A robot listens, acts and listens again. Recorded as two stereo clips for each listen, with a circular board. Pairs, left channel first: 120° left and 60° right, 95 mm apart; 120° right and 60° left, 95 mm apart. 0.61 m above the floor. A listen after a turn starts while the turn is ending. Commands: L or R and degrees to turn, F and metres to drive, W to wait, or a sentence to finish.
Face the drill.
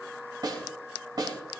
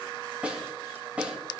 W
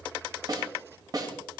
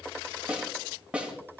W
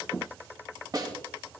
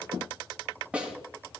I can't make out a drill, only a snare drum.